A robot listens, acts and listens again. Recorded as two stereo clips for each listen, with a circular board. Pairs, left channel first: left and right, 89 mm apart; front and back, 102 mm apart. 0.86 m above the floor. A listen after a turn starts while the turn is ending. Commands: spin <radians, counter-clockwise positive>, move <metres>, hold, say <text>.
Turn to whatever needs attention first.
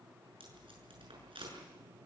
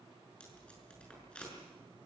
hold
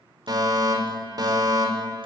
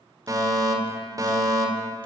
spin -2.18
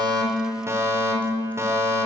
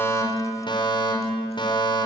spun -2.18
spin -0.61
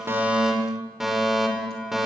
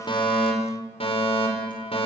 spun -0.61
say Facing the fire alarm, over 4 m away.